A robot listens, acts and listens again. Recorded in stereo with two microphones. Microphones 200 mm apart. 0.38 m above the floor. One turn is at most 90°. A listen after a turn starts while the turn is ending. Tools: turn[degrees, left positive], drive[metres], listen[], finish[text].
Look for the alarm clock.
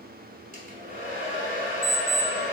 Thought: The alarm clock: about 25° right or 155° right.
Action: turn[-25]
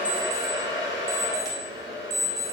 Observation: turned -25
Thought: So it is at 125° right.
Action: turn[-90]
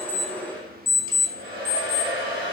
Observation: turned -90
Thought: The alarm clock is now 15° right.
Action: turn[-15]
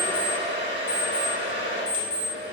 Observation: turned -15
Action: finish[Facing the alarm clock.]